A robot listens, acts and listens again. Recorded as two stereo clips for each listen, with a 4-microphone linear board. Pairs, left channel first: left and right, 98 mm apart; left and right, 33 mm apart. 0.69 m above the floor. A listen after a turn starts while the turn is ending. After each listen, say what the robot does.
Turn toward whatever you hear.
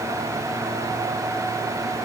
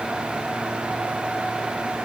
Keep listening.
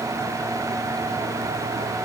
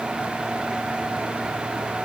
Keep listening.
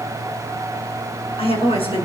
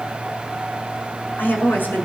Turn 90° left.
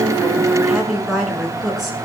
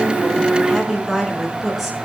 Facing the woman speaking.